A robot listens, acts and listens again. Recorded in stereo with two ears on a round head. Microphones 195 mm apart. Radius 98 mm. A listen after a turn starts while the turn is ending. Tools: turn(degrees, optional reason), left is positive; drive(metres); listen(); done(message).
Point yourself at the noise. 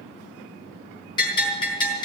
turn(degrees=20, reason="The bell: about 20° left or 160° left.")
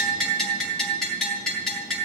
done("Facing the bell, over 4 m away.")